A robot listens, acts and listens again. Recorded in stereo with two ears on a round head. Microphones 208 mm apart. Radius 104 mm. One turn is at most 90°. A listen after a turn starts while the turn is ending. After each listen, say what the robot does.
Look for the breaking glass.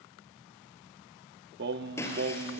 Turn 30° left.
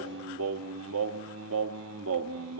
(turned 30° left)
Keep listening.
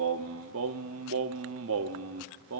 I heard breaking glass, but can't make it out now. It was about 20° right or 140° left.